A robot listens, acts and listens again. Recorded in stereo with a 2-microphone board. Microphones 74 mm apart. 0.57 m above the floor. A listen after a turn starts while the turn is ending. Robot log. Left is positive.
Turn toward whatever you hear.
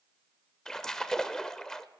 cmd yaw +30
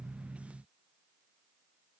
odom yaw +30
cmd idle
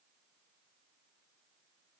end: I heard a splash, but can't make it out now. It was about 20° right or 140° left.